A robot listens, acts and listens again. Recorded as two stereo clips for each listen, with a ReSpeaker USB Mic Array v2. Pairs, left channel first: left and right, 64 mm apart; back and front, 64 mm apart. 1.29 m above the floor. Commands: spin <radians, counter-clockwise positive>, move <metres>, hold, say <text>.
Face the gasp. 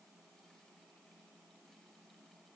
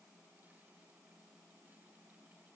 hold
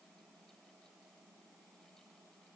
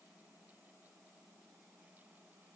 hold
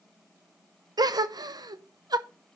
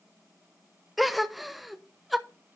spin -1.57
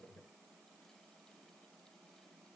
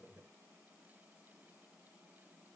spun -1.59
say Facing where the gasp came from. I can't hear it now.